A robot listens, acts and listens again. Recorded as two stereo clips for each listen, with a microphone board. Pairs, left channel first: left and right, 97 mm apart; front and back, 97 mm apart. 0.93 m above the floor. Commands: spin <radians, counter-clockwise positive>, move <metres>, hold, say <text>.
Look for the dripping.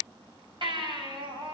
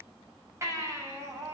hold
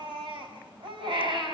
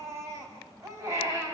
hold
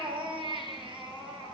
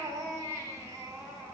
say I can't make out dripping, only a baby crying.